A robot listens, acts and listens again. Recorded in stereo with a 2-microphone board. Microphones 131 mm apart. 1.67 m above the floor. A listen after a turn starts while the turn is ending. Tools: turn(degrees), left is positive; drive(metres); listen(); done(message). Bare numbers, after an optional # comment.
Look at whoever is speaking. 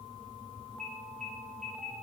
listen()
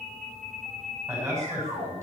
# The man speaking: about 25° right or 155° right.
turn(-25)
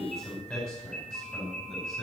done("Found it: a man speaking, straight ahead.")